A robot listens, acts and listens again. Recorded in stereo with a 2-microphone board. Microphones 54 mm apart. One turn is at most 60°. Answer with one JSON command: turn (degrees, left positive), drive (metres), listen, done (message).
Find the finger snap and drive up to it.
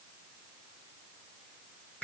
{"listen": true}
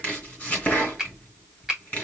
{"turn": -30}
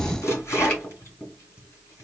{"listen": true}
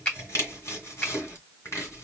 {"turn": 20}
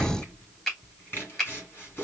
{"turn": 10}
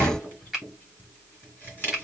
{"drive": 1.0}
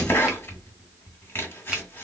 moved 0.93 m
{"listen": true}
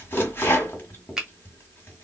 {"turn": -10}
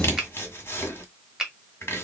{"drive": 1.0}
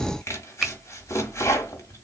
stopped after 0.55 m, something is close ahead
{"done": "Arrived at the finger snap, straight ahead."}